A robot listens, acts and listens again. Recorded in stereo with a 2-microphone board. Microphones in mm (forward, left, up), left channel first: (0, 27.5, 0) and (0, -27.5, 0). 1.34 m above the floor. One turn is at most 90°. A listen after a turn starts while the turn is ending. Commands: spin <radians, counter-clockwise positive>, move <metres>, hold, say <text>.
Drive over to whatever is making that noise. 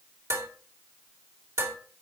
spin -1.13
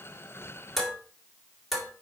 move 1.0
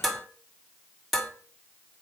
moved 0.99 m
move 1.0
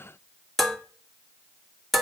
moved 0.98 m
move 1.0
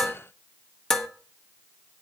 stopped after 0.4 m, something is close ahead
spin 0.17
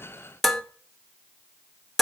say Arrived at the dishes clattering, straight ahead.